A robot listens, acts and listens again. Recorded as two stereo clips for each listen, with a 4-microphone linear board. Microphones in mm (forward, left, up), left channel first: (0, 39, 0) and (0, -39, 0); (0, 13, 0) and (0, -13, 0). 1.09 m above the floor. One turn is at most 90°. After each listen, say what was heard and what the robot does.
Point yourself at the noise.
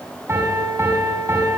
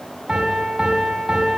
The piano: about 35° right or 145° right. Turn 35° right.
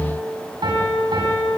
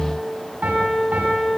So it is at 115° right. Turn 90° right.
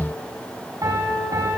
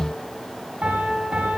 The piano is now 45° right. Turn 45° right.
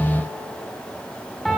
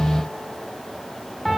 Facing the piano.